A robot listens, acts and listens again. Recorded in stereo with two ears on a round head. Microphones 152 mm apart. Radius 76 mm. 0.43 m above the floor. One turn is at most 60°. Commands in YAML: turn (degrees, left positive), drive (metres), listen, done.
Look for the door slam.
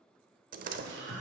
turn: -50
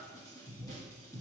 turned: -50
listen: true
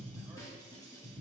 done: "I heard a door slam, but can't make it out now. It was about straight ahead or 80° right."